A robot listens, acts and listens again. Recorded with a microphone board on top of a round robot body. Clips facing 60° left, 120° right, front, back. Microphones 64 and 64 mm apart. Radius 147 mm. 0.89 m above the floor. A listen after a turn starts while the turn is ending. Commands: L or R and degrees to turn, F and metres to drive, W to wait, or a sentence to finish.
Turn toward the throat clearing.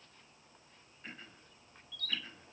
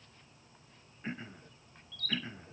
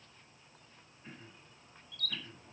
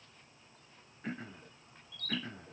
L175
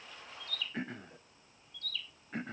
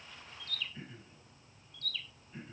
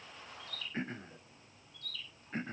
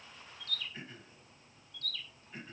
L45
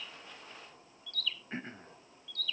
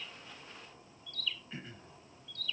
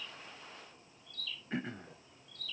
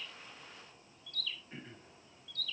L10
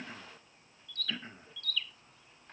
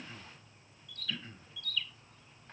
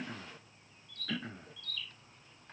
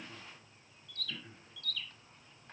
Found it: throat clearing, straight ahead.